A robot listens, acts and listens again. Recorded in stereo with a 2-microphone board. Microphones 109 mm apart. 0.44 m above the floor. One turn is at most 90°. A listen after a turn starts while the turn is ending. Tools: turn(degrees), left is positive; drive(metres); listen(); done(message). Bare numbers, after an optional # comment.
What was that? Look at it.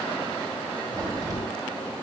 # The crack: about 30° right or 150° right.
turn(-30)
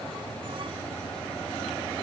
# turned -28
listen()
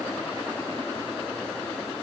done("I heard a crack, but can't make it out now. It was about 5° right or 120° right.")